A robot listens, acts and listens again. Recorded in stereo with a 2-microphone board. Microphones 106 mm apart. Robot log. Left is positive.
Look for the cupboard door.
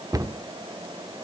note: The cupboard door: about 35° right or 145° right.
cmd yaw -35
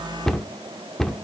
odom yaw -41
end: Facing the cupboard door, under 1 m away.